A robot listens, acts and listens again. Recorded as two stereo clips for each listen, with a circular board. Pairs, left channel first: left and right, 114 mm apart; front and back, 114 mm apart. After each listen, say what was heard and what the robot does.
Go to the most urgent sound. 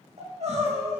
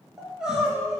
The crying: 95° right. Turn 95° right.
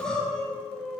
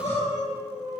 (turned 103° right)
Drive 1.0 m forward.
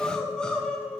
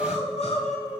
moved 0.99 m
The crying is now 10° left. Turn 10° left.
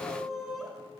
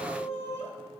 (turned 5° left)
Drive 1.0 m forward.
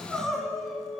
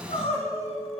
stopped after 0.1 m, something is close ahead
Arrived at the crying, straight ahead.